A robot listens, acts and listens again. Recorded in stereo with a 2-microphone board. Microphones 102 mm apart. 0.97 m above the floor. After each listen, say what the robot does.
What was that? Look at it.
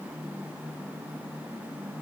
Keep listening.
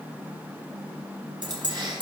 Turn 45° right.
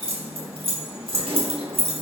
Turn 85° right.
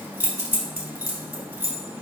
Turn 15° right.
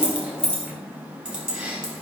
Turn 10° right.
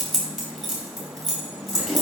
Facing the keys jangling, over 4 m away.